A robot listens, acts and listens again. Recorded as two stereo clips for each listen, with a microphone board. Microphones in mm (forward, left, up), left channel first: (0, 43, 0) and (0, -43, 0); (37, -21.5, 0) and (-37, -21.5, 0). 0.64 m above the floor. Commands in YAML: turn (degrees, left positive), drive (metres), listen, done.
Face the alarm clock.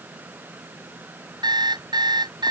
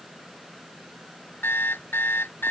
turn: -60
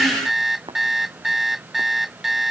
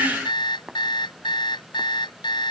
done: "Found it: an alarm clock, straight ahead."